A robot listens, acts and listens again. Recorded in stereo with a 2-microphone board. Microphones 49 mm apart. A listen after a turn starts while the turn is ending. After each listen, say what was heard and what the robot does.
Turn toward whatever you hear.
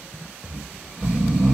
The snoring: about 20° right or 160° right. Turn 20° right.
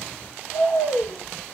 Found it: snoring, straight ahead.